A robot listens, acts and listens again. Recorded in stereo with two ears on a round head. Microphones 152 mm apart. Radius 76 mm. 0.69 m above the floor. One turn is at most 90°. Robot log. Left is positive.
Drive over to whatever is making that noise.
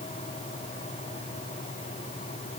cmd idle
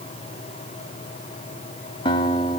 note: The guitar: about 30° left or 150° left.
cmd yaw +30
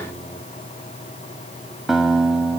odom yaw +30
cmd fwd 1.0
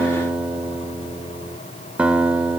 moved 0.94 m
cmd fwd 1.0
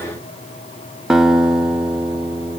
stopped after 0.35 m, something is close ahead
end: Arrived at the guitar, straight ahead.